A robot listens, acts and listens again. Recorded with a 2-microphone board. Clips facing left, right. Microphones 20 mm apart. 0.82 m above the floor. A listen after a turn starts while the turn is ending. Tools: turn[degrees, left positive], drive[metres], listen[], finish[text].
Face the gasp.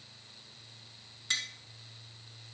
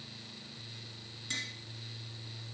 Action: listen[]
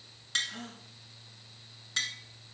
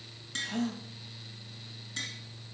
Thought: The gasp: about 55° right or 125° right.
Action: turn[-55]
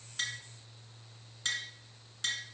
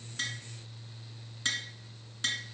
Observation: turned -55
Action: listen[]
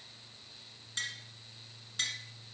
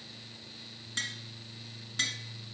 Action: finish[I heard a gasp, but can't make it out now. It was about straight ahead or 70° right.]